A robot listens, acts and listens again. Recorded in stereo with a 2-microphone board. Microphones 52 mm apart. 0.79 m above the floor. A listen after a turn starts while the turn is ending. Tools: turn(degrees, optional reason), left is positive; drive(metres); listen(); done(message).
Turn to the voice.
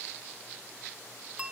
listen()
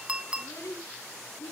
turn(degrees=90)
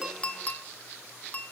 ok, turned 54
turn(degrees=35, reason="Nothing new. It was at 35° left.")
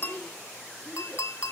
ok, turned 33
listen()
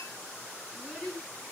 turn(degrees=15, reason="The child speaking is now 15° left.")
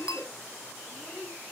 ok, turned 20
done("Facing the child speaking.")